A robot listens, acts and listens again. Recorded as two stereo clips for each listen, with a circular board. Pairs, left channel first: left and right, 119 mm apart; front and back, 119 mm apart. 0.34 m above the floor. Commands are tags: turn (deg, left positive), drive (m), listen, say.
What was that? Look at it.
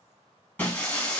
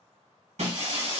<turn deg="165"/>
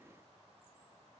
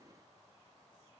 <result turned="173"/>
<turn deg="-10"/>
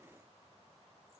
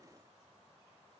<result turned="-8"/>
<say>Facing where the breaking glass came from. I can't hear it now.</say>